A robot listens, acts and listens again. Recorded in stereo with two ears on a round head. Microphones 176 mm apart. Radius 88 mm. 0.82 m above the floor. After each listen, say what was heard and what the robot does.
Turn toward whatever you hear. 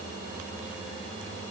Keep listening.
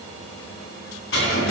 The cutlery clinking: about 65° left or 115° left. Turn 65° left.
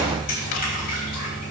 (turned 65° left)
So it is at 45° left. Turn 45° left.
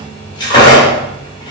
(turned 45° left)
The cutlery clinking is now 25° left. Turn 25° left.
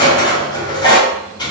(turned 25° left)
The cutlery clinking is now 20° left. Turn 20° left.
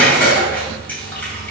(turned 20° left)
Found it: cutlery clinking, straight ahead.